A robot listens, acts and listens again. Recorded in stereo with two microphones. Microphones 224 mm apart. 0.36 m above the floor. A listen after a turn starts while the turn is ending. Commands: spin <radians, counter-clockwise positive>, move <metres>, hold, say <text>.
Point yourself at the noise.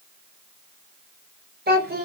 spin -0.79
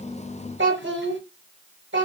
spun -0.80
spin -1.40
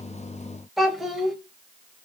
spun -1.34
say Facing the child speaking.